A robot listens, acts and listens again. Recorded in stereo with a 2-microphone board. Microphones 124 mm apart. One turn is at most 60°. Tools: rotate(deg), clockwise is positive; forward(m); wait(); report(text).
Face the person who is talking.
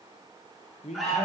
rotate(-60)
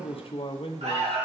rotate(-50)
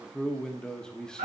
report("Facing the man speaking.")